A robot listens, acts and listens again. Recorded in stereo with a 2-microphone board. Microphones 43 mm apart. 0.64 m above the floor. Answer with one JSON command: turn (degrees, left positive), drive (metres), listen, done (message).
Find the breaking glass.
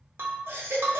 {"turn": -65}
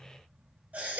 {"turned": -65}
{"listen": true}
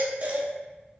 {"done": "I heard breaking glass, but can't make it out now. It was about straight ahead or 50° right."}